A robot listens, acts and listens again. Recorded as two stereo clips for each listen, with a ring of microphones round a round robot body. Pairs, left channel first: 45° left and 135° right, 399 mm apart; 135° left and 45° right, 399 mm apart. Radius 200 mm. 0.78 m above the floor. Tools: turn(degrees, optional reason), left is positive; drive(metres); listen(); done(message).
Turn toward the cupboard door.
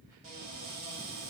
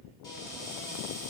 turn(degrees=-145, reason="The cupboard door: 145° right.")
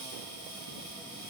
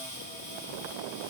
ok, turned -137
done("Found it: a cupboard door, straight ahead.")